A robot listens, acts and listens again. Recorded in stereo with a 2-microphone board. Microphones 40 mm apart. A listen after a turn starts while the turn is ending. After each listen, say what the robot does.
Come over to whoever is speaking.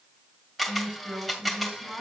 Turn 50° right.
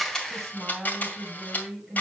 Drive 1.0 m forward.
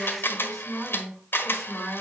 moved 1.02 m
Drive 1.0 m forward.
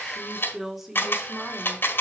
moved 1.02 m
Turn 10° right.
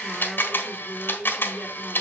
Drive 1.0 m forward.
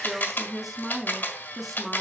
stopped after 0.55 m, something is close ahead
I am next to the woman speaking.